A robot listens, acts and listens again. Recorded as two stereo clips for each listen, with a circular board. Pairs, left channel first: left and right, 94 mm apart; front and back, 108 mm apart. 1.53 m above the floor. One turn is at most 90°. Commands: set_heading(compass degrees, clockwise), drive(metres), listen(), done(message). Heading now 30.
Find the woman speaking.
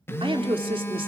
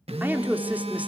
set_heading(120)
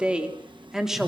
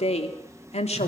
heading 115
done("Facing the woman speaking, 2 to 4 m away.")